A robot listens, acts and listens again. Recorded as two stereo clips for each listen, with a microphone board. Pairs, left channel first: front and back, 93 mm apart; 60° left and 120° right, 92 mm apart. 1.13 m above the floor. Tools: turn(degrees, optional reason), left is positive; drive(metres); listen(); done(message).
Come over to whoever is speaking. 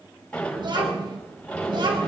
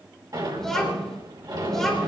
turn(degrees=145, reason="The child speaking: 145° left.")
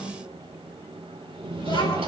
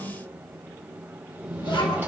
turn(degrees=30, reason="The child speaking is now 30° left.")
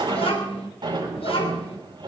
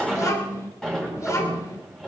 drive(metres=1.0)
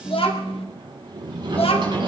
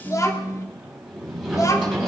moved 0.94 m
drive(metres=1.0)
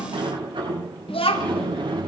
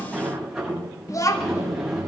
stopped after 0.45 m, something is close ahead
done("I am next to the child speaking.")